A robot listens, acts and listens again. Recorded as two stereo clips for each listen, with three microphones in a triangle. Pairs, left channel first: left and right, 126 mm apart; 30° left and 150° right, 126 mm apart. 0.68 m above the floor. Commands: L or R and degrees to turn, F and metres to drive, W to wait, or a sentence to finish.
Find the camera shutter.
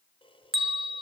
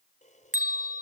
L45
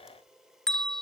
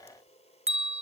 Found it: a camera shutter, straight ahead.